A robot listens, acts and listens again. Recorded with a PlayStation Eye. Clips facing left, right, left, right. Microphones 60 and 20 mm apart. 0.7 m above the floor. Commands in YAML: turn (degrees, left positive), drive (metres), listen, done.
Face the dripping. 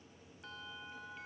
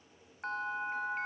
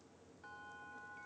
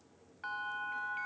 listen: true
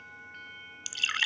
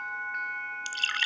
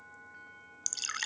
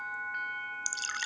turn: 30
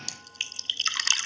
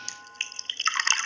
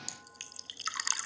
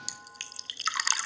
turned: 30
turn: -30
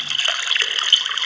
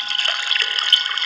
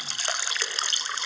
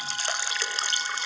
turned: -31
done: "Found it: dripping, straight ahead."